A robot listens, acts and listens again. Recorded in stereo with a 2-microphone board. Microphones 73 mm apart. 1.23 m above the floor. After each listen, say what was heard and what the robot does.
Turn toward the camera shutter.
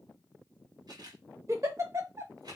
The camera shutter: about 65° right or 115° right. Turn 65° right.
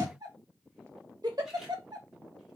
Keep listening.
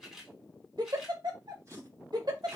Facing the camera shutter.